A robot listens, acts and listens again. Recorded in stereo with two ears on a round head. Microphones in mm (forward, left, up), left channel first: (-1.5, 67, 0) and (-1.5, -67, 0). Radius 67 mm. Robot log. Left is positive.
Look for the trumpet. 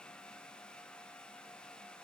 cmd idle
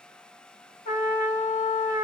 note: The trumpet: about 45° left or 135° left.
cmd yaw +45
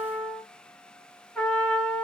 end: Found it: a trumpet, straight ahead.